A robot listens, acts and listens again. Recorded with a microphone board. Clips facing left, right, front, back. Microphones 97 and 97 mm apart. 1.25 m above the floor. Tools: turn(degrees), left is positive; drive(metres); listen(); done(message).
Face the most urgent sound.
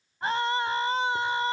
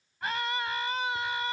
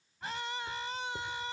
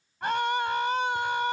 turn(degrees=150)
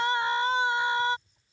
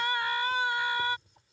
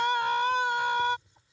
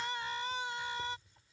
turn(degrees=25)
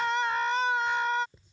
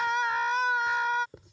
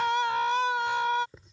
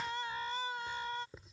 done("Facing the scream.")